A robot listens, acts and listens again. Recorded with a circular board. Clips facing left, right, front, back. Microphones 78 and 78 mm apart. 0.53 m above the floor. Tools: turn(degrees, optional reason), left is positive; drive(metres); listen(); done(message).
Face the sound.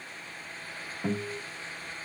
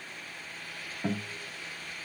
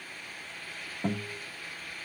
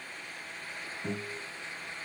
done("Facing the guitar.")